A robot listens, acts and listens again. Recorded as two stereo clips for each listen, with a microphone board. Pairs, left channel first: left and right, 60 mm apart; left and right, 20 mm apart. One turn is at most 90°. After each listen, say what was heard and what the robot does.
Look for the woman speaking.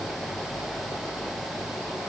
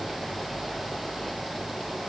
Keep listening.
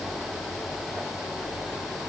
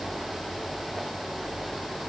Keep listening.
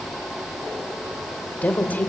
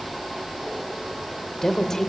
The woman speaking: about 30° left or 150° left. Turn 30° left.
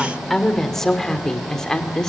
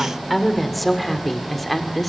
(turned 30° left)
So it is at 10° left. Turn 10° left.
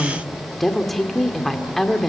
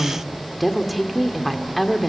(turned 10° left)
Facing the woman speaking.